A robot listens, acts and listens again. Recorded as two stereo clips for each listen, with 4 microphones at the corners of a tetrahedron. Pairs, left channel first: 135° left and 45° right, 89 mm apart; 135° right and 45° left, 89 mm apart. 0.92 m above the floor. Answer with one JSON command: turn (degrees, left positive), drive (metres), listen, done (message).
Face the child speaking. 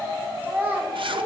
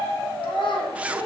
{"turn": -120}
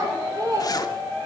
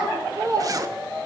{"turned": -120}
{"done": "Found it: a child speaking, straight ahead."}